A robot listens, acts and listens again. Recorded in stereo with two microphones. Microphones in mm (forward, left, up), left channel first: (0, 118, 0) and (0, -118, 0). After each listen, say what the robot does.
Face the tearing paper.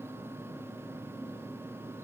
Keep listening.
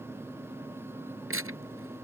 Turn 65° right.
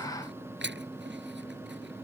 Turn 50° right.
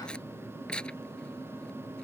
Found it: tearing paper, straight ahead.